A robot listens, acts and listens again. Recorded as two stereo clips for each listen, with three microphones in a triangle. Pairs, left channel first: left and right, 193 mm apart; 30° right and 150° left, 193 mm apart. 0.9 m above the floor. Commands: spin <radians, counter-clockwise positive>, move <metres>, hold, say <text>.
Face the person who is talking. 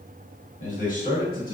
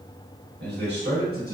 spin 2.18
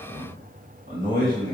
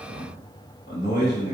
spin -1.05
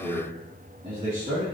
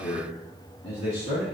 spin -0.52
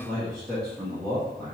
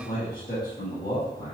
say Found it: a man speaking, straight ahead, 1 to 2 m away.